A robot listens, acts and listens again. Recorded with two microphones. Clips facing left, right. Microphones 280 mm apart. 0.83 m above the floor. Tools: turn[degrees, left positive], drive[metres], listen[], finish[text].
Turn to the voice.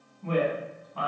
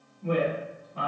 Thought: The woman speaking: about 20° right or 160° right.
Action: turn[-20]
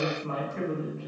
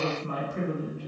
Thought: So it is at 140° right.
Action: turn[-140]
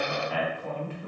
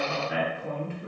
Thought: The woman speaking is now 30° right.
Action: turn[-30]
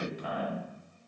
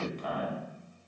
Thought: The woman speaking is now 10° left.
Action: turn[10]
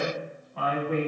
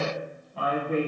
Action: finish[Facing the woman speaking.]